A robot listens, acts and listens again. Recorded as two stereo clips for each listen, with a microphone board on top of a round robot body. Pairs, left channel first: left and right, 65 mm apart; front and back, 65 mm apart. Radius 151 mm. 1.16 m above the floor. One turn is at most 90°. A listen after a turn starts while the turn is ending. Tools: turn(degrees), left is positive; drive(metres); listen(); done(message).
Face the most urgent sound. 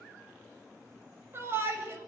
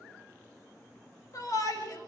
turn(degrees=-35)
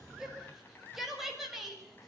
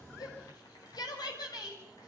done("Found it: a shout, straight ahead.")